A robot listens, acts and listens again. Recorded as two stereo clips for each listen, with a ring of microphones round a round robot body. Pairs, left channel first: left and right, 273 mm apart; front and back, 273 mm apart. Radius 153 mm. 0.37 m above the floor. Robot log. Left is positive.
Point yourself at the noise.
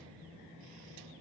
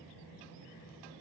cmd idle
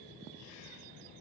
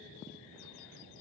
cmd idle
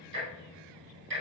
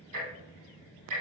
note: The ticking: 140° right.
cmd yaw -140
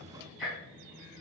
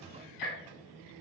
end: Facing the ticking.